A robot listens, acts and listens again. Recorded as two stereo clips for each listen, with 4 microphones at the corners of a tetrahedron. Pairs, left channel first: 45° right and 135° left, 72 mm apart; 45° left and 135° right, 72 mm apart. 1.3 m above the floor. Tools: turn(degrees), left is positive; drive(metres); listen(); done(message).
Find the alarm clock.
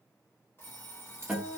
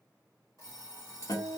done("Facing the alarm clock.")